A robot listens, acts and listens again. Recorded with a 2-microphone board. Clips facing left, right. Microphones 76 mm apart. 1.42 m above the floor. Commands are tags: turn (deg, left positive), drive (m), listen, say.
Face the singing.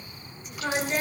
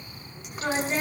<turn deg="-15"/>
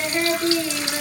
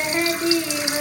<turn deg="-150"/>
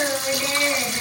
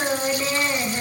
<turn deg="-20"/>
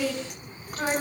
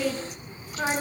<say>Found it: singing, straight ahead.</say>